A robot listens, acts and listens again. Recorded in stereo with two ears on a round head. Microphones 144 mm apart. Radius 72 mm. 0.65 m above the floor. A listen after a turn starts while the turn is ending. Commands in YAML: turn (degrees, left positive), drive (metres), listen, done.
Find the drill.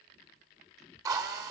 turn: -20
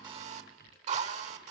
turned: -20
turn: -135
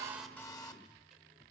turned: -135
turn: 20
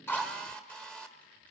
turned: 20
done: "Facing the drill, 1 to 2 m away."